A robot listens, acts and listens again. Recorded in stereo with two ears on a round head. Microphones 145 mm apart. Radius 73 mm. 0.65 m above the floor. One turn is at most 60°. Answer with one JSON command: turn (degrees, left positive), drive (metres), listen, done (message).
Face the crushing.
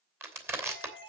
{"turn": -15}
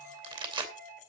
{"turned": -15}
{"turn": -60}
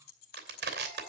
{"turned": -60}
{"turn": -60}
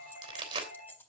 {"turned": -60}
{"turn": -30}
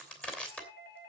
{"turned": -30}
{"done": "Found it: crushing, straight ahead, 2 to 4 m away."}